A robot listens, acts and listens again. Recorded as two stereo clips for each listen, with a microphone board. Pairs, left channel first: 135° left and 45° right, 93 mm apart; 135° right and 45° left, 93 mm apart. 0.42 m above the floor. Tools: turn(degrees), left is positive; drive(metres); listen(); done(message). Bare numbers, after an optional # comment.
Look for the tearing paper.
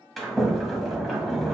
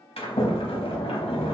listen()
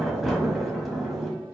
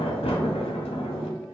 listen()
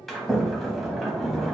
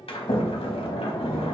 done("I can't make out tearing paper to turn to.")